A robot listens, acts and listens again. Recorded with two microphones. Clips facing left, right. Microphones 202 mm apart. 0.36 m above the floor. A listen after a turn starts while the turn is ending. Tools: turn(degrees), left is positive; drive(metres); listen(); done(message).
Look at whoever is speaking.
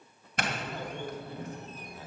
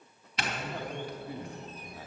turn(degrees=-30)
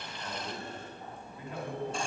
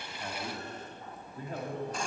turn(degrees=-135)
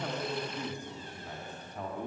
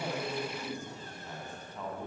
turn(degrees=20)
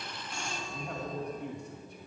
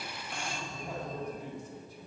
done("Found it: a man speaking, straight ahead, 2 to 4 m away.")